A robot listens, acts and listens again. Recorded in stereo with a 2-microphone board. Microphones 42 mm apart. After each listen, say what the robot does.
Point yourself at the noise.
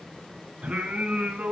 Turn 30° right.
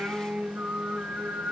Turn 125° right.
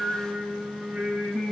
Turn 30° right.
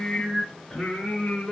Turn 10° left.
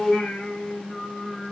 Found it: singing, straight ahead, over 4 m away.